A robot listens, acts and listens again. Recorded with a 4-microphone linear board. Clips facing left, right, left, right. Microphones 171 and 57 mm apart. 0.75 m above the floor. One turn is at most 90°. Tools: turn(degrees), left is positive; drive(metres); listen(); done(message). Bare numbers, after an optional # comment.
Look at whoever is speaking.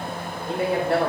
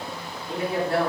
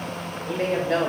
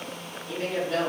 turn(90)
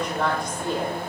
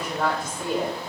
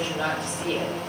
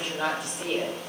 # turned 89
# So it is at 10° right.
turn(-10)
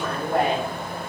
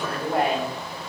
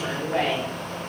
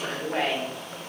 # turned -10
done("Found it: a woman speaking, straight ahead, 2 to 4 m away.")